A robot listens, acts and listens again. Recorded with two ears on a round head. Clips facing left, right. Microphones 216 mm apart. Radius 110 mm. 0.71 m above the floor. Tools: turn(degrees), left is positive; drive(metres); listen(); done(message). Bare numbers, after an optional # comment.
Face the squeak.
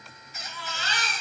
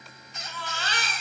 turn(30)
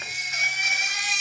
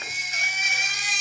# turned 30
listen()
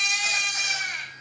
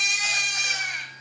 listen()
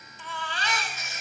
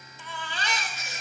# So it is at 30° right.
turn(-30)
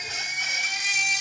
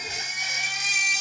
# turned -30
listen()
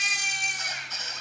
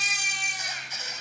# The squeak is now 10° right.
turn(-10)
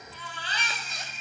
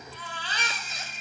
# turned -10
done("Facing the squeak, 1 to 2 m away.")